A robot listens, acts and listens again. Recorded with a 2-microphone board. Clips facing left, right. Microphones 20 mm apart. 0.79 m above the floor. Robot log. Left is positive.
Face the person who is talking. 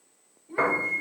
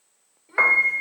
cmd yaw -90
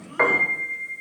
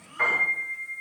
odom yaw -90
cmd idle
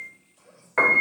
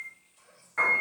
end: Facing the child speaking.